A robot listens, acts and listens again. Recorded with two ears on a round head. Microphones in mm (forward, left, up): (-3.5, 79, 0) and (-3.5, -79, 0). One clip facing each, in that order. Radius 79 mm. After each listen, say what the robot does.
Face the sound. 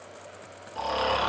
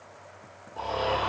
Turn 75° left.
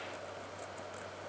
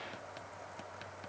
Keep listening.
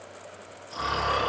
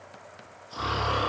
Facing the snoring.